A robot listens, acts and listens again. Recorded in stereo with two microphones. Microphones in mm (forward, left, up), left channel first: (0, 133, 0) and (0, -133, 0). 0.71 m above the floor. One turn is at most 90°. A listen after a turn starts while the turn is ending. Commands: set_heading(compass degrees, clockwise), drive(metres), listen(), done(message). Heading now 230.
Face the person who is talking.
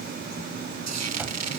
listen()
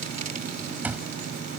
listen()
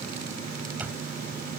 done("I can't make out anyone speaking to turn to.")